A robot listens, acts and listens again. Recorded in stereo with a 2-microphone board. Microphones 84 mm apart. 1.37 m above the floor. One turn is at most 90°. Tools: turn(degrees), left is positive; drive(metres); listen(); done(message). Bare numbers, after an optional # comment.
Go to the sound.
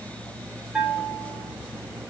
turn(-30)
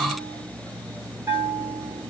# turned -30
# So it is at 140° right.
turn(-90)
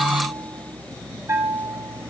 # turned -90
# The bell is now 35° right.
turn(-35)
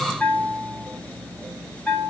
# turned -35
# The bell is now 15° left.
turn(15)
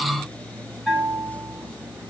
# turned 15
drive(1.0)
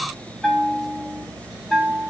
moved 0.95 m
drive(1.0)
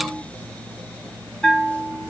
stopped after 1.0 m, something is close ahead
# The bell is now 10° left.
turn(10)
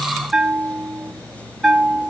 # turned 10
done("I am next to the bell.")